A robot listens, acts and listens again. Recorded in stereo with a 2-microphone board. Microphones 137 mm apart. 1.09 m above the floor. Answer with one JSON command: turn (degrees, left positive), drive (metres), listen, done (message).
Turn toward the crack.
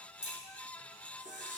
{"turn": -30}
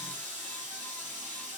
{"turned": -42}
{"listen": true}
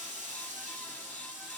{"done": "I heard a crack, but can't make it out now. It was about 35° left or 130° right."}